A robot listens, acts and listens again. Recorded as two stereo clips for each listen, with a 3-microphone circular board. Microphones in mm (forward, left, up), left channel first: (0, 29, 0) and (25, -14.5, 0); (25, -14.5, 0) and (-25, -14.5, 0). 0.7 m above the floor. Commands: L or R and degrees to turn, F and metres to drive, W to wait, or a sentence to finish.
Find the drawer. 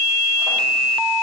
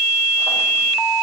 W
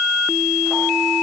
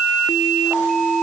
W
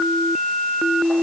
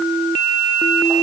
I can't make out a drawer.